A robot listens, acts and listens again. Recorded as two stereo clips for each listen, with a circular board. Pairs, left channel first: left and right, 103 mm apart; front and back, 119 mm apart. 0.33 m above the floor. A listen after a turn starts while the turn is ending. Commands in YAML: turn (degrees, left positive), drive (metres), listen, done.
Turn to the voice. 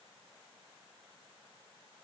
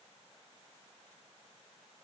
listen: true
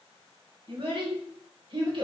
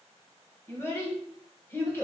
turn: -70
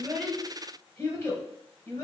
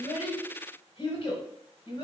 turn: 30
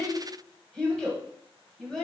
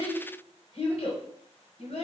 done: "Found it: a child speaking, straight ahead, 1 to 2 m away."